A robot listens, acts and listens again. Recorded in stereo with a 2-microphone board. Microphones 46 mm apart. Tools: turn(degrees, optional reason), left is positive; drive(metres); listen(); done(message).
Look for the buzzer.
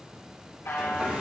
turn(degrees=70, reason="The buzzer: about 70° left or 110° left.")
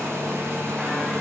listen()
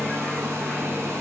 listen()
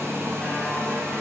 done("I heard a buzzer, but can't make it out now. It was about straight ahead or 40° left.")